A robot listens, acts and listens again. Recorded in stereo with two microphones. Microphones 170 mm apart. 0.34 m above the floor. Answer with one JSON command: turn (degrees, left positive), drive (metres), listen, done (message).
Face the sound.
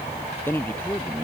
{"turn": 30}
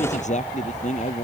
{"turn": 135}
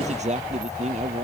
{"turn": -40}
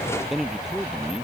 {"done": "Found it: a man speaking, straight ahead."}